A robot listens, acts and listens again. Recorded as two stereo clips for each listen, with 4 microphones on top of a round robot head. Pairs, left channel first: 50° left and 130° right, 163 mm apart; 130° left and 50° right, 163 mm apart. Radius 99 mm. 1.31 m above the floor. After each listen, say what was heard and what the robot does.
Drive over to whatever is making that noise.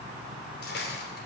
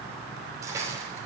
The cutlery clinking: 20° left. Turn 20° left.
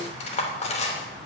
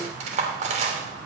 Drive 1.0 m forward.
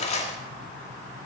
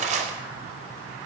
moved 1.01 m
Drive 1.0 m forward.
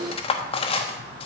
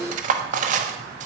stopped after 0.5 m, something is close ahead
I am next to the cutlery clinking.